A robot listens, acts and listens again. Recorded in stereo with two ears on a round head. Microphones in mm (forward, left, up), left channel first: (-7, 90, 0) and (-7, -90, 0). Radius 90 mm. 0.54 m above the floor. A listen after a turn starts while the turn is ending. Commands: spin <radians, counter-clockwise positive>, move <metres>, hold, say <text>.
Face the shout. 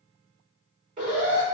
hold
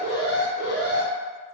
hold
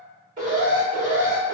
say I can't make out a shout to turn to.